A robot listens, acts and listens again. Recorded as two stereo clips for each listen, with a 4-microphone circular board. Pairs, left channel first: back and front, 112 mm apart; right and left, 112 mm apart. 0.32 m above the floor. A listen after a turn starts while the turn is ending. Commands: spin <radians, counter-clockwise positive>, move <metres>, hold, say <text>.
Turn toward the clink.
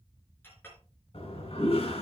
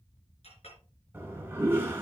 spin -1.92
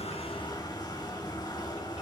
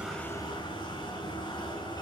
hold
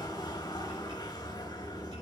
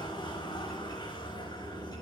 hold
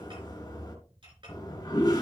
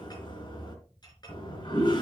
spin -0.70
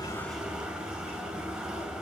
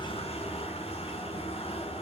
hold
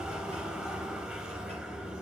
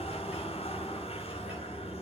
hold
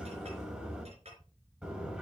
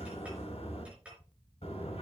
spin 0.17
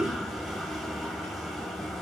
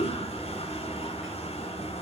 hold
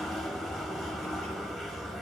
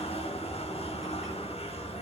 hold
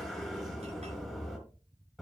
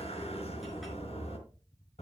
say Facing where the clink came from. I can't hear it now.